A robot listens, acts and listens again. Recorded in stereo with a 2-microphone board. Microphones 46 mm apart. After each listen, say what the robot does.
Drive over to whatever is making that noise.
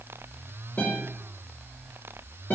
Turn 45° left.
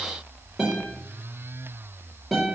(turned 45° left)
Drive 1.0 m forward.
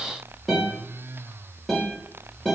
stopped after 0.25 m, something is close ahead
Something is in my way. I am facing the guitar but have not reached it.